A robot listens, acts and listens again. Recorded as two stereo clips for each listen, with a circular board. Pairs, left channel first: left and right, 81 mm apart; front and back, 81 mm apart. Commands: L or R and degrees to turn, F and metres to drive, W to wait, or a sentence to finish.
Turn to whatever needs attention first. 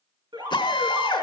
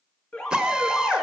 R80
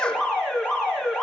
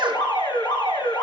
R10
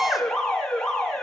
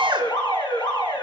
Facing the alarm, 2 to 4 m away.